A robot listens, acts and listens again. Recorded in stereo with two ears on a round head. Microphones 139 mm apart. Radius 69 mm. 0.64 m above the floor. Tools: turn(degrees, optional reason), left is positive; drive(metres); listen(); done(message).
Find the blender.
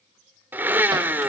turn(degrees=-30)
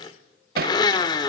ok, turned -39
turn(degrees=25, reason="So it is at 25° left.")
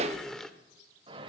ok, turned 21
done("Facing the blender.")